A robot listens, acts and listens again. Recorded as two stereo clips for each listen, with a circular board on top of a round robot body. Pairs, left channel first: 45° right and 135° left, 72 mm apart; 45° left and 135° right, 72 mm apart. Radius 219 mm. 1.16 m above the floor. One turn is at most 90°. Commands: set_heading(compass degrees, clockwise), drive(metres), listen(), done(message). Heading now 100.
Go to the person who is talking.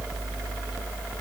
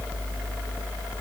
listen()
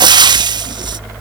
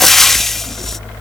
listen()
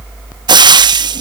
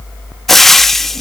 done("I can't make out anyone speaking, only frying.")